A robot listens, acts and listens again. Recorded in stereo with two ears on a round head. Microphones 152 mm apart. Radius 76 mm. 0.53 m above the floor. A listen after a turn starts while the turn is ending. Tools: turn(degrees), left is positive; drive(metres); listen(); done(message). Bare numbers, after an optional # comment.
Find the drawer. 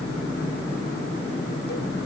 listen()
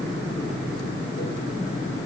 listen()
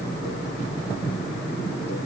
done("I can't make out a drawer.")